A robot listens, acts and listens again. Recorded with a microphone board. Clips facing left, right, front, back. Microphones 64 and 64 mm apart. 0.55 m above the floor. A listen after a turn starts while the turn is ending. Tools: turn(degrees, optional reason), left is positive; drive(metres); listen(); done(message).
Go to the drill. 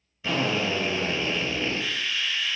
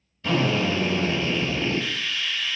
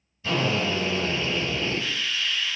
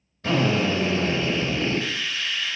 turn(degrees=170, reason="The drill: 170° left.")
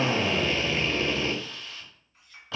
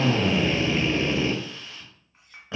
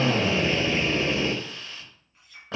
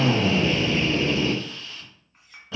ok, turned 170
turn(degrees=-25, reason="The drill is now 25° right.")
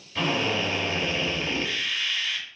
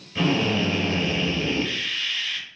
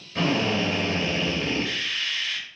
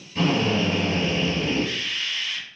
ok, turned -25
turn(degrees=10, reason="The drill is now 10° left.")
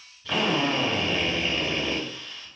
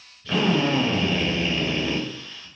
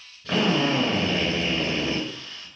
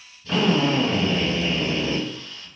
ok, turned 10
drive(metres=1.0)
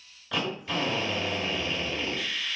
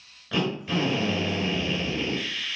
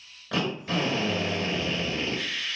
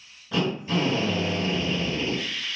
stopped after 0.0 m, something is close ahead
done("Something is in my way. I am facing the drill but have not reached it.")